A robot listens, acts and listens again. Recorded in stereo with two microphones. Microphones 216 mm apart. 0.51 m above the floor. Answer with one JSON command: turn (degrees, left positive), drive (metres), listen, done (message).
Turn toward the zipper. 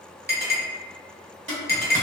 {"turn": -60}
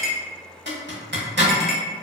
{"turn": -55}
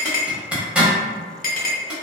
{"done": "Facing the zipper, under 1 m away."}